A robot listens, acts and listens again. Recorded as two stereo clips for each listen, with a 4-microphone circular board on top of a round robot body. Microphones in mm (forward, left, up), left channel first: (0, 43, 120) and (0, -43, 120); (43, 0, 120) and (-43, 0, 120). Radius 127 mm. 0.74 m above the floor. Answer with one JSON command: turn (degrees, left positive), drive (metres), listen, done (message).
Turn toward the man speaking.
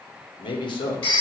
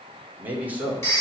{"turn": 110}
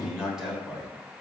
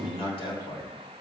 {"done": "Facing the man speaking, over 4 m away."}